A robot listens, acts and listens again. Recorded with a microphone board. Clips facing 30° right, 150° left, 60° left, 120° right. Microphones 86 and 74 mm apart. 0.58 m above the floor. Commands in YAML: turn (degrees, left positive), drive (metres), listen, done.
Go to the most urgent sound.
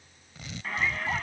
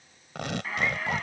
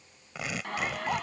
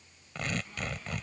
turn: 60
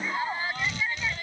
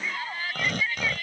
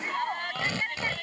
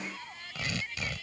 turn: 35
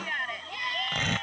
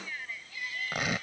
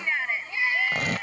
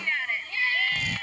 turn: -10
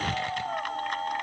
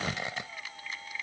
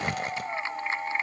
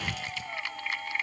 drive: 1.0
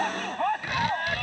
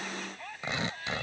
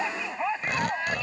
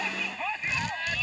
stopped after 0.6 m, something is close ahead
done: "Something is in my way. I am facing the shout but have not reached it."